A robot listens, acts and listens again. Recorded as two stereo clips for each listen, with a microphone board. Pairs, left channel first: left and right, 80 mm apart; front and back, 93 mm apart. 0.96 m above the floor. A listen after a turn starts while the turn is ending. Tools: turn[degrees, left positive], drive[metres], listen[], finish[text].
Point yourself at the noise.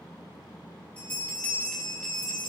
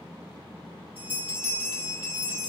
Thought: The bell: 15° left.
Action: turn[15]
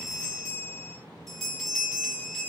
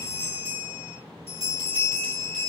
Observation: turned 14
Action: finish[Found it: a bell, straight ahead, over 4 m away.]